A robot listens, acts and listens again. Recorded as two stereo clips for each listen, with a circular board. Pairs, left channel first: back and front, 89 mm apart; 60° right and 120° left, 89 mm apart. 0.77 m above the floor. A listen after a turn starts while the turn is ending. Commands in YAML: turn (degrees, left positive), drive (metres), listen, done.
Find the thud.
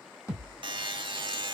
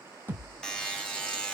turn: -125
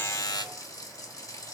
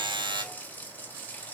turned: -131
done: "I heard a thud from this way, but can't make it out now."